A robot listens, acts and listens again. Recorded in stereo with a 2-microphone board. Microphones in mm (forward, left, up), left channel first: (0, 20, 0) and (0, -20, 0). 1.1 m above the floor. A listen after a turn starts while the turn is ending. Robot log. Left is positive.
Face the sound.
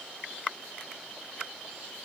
cmd idle
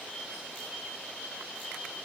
cmd idle
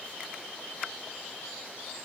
end: I can't make out anything to turn to.